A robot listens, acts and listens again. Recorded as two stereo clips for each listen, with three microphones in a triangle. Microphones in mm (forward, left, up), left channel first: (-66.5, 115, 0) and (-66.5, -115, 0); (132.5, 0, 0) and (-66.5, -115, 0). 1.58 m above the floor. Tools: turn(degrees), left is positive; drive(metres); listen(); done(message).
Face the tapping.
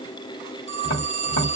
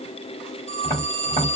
turn(degrees=85)
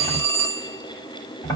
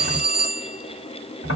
turn(degrees=15)
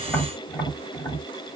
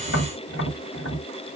done("Found it: tapping, straight ahead.")